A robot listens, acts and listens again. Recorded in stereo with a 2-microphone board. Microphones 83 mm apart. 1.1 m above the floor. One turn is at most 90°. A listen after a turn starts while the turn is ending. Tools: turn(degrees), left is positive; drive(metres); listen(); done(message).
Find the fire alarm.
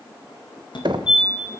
turn(degrees=60)
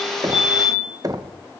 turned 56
turn(degrees=45)
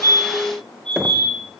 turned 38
turn(degrees=10)
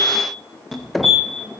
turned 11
done("Found it: a fire alarm, straight ahead, 2 to 4 m away.")